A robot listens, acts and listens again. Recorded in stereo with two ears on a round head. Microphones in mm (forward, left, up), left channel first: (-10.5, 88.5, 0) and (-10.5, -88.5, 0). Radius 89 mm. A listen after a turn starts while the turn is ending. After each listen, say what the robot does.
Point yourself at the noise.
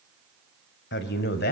Turn 50° left.
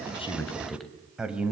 Facing the man speaking.